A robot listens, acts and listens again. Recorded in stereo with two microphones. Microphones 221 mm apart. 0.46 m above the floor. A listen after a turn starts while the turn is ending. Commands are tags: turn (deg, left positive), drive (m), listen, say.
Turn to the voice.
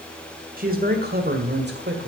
<turn deg="-55"/>
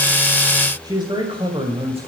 <turn deg="-25"/>
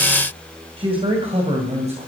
<turn deg="-30"/>
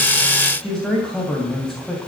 <say>Found it: a man speaking, straight ahead.</say>